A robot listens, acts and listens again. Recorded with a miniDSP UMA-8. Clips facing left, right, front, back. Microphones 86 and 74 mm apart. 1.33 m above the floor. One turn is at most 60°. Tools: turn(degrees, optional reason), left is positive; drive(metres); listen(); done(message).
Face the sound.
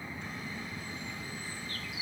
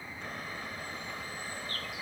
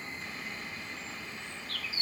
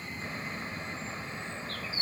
turn(degrees=-60, reason="The bird: 125° right.")
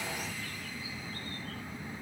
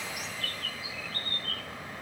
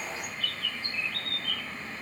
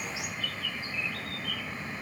turn(degrees=-60, reason="The bird is now 100° right.")
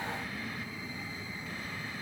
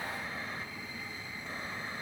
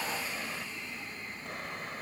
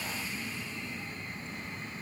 turn(degrees=-40, reason="Nothing new. It was at 40° right.")
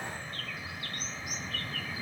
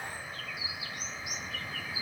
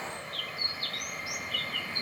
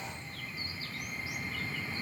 done("Facing the bird.")